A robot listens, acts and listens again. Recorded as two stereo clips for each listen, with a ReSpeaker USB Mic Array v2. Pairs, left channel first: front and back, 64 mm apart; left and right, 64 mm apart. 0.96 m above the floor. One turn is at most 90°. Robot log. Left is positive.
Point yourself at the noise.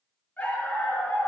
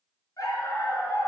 note: The dog barking: 65° left.
cmd yaw +65
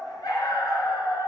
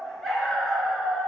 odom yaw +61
end: Found it: a dog barking, straight ahead, over 4 m away.